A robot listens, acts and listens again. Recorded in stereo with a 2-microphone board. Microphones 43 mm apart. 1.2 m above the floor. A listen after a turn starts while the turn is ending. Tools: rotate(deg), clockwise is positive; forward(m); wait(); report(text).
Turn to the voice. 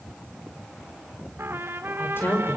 rotate(-55)
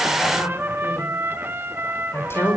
rotate(-70)
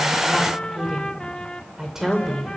rotate(10)
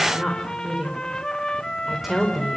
report("Facing the woman speaking, over 4 m away.")